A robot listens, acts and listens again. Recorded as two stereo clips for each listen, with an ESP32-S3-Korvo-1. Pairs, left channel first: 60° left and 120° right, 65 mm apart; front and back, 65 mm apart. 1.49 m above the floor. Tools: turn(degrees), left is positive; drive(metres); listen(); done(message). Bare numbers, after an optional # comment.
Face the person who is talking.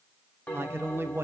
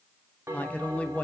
# The man speaking: 65° right.
turn(-65)
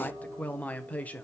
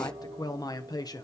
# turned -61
done("Found it: a man speaking, straight ahead.")